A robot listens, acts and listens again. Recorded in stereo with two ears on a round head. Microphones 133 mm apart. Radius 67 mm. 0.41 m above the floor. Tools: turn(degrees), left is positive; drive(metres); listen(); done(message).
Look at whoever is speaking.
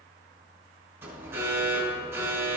listen()
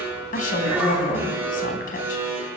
turn(degrees=60)
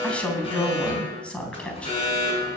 turn(degrees=10)
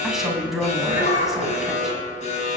done("Facing the woman speaking, 2 to 4 m away.")